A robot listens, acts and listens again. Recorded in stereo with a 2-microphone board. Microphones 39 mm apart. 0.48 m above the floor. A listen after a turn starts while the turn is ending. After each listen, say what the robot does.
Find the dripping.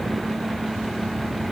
Keep listening.
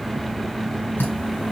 Turn 70° left.
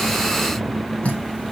Turn 35° left.
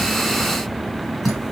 Facing the dripping, 2 to 4 m away.